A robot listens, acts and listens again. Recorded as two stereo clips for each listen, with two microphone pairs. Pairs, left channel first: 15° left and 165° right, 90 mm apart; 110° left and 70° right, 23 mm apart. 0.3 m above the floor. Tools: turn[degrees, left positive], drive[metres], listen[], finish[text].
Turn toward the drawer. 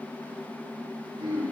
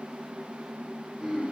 Action: listen[]
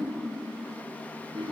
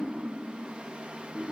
Action: listen[]
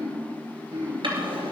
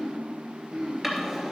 Thought: The drawer: 145° right.
Action: turn[-145]
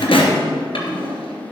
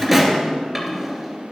Thought: The drawer is now 25° left.
Action: turn[25]
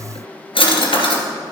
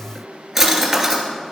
Thought: The drawer is now 15° left.
Action: turn[15]
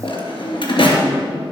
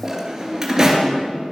Action: finish[Found it: a drawer, straight ahead, 2 to 4 m away.]